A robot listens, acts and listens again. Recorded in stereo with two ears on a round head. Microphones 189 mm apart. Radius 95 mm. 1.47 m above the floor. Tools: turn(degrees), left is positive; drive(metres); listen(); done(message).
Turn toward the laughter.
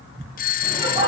turn(degrees=-25)
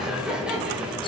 done("Facing the laughter, over 4 m away.")